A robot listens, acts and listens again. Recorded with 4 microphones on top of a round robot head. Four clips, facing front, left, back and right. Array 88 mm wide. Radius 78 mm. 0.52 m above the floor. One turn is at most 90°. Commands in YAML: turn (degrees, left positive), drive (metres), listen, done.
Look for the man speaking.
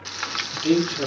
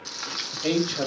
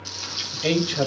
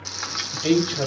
turn: 90
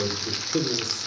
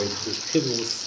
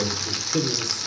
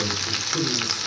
turn: 75
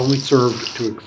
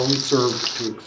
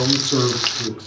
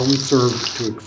turn: -30
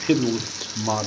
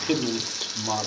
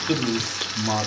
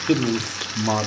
turn: -20
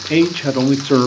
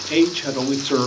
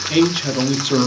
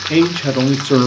turn: -30
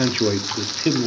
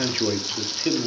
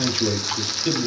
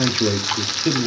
done: "Facing the man speaking."